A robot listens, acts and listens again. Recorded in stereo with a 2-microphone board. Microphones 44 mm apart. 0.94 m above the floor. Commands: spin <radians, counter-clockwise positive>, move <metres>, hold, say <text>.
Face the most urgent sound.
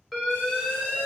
spin 0.52
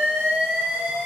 spin -0.52
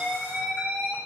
spin -0.35
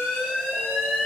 say Found it: an alarm, straight ahead, 1 to 2 m away.